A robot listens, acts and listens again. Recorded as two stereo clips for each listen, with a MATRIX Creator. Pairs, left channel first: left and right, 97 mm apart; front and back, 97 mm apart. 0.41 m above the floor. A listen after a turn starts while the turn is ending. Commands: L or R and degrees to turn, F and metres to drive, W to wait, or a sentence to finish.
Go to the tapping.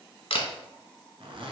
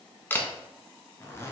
W
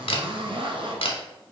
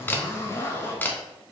W
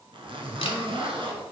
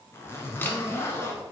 I can't make out tapping to turn to.